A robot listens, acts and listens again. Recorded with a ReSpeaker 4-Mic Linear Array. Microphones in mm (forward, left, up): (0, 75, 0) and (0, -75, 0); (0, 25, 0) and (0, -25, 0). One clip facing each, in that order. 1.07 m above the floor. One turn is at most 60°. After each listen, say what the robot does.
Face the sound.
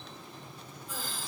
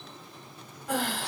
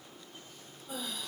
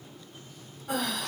Turn 60° right.
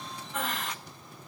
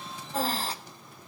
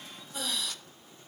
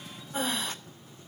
Turn 35° right.
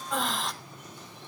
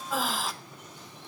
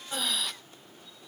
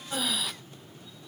Facing the breathing.